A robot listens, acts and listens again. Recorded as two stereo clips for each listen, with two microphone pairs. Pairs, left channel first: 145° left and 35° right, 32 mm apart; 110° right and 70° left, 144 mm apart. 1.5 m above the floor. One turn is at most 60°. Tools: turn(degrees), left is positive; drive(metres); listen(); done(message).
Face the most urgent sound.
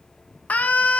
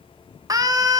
turn(degrees=60)
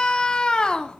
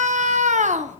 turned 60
turn(degrees=60)
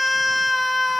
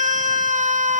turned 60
turn(degrees=55)
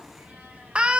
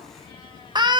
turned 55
turn(degrees=15)
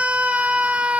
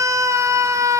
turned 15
done("Facing the scream.")